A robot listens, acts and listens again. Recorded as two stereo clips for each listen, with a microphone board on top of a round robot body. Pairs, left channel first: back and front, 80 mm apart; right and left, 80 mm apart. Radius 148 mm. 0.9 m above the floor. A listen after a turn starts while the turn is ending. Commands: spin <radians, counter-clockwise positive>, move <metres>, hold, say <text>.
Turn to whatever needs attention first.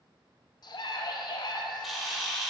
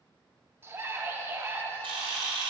spin 2.53
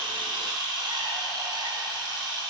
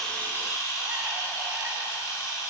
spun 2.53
hold
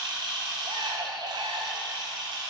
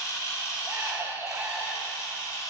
spin 0.44
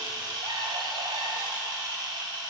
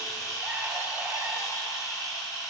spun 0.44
hold
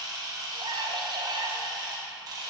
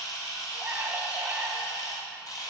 spin 0.26
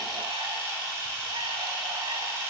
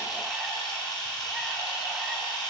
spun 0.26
hold
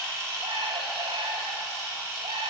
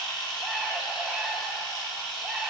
say Facing the scream, 1 to 2 m away.